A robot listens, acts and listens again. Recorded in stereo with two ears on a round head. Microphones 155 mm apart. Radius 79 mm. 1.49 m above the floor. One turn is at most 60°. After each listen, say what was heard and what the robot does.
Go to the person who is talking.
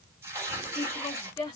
The woman speaking: about 20° left or 160° left. Turn 20° left.
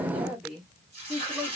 Drive 1.0 m forward.
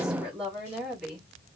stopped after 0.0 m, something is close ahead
Something is in my way. I am facing the woman speaking but have not reached it.